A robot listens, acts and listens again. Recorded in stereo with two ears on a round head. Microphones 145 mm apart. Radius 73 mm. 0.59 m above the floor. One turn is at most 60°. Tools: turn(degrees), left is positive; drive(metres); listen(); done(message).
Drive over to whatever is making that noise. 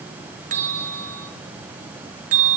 turn(degrees=-50)
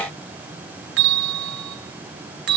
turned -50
turn(degrees=-60)
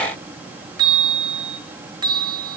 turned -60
turn(degrees=-30)
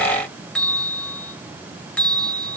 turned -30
drive(metres=1.0)
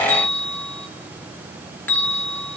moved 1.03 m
turn(degrees=10)
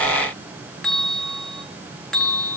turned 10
drive(metres=1.0)
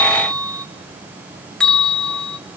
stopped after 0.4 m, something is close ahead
done("I am next to the bell.")